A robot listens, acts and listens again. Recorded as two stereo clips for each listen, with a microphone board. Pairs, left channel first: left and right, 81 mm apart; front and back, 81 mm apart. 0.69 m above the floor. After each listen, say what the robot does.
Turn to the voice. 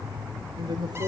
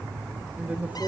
Turn 110° right.
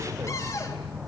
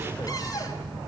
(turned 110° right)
Keep listening.
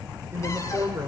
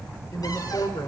Turn 35° right.
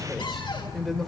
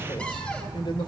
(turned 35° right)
Facing the woman speaking, 2 to 4 m away.